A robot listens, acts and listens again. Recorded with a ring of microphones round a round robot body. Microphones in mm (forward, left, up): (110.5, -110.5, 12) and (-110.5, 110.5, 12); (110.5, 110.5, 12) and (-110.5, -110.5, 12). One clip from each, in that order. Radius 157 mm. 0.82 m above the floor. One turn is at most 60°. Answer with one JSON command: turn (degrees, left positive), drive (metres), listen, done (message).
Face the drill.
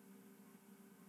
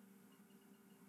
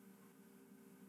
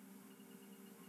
{"listen": true}
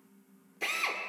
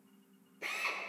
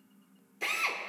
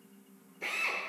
{"turn": -10}
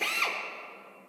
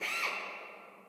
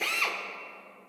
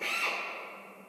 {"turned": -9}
{"done": "Found it: a drill, straight ahead."}